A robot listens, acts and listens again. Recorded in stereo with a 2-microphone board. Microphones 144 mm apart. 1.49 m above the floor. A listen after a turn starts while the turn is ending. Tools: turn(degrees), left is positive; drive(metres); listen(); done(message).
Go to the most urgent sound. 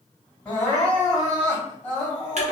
turn(degrees=30)
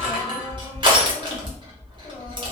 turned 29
listen()
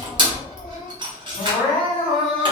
turn(degrees=135)
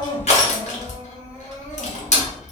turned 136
listen()
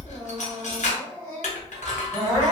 drive(metres=1.0)
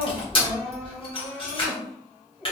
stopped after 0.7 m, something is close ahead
done("Arrived at the crying, straight ahead.")